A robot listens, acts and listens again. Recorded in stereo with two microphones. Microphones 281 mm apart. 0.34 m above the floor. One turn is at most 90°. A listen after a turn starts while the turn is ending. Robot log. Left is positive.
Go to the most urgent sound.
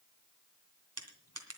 cmd idle
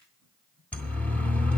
cmd yaw +30
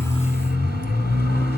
note: So it is at 145° left.
cmd yaw +90
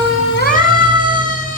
note: The siren is now 30° left.
cmd yaw +30
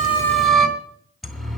cmd fwd 1.0
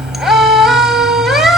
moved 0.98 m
cmd fwd 1.0
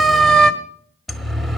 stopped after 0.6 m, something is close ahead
end: Arrived at the siren, straight ahead.